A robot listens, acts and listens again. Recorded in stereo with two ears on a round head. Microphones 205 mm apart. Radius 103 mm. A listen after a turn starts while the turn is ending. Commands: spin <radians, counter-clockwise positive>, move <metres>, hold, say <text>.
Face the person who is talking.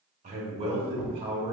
spin -0.35
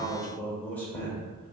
spin 0.17
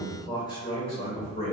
spin 0.52
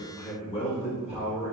spin 0.52
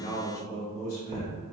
spin 0.26
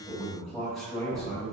say Facing the man speaking, 1 to 2 m away.